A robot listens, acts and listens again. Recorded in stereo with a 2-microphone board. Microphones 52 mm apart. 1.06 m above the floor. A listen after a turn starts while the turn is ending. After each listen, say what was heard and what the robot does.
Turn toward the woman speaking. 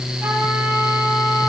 Keep listening.
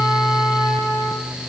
Keep listening.
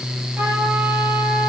I can't make out a woman speaking.